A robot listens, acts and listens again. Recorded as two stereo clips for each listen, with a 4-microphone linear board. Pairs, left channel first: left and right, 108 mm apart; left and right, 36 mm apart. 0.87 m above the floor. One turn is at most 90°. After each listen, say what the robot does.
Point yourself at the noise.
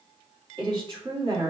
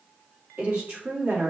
Turn 50° right.
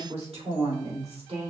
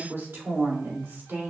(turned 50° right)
Turn 75° right.
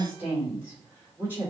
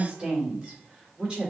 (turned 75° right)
Turn 15° right.
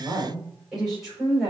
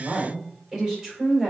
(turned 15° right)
Found it: a woman speaking, straight ahead.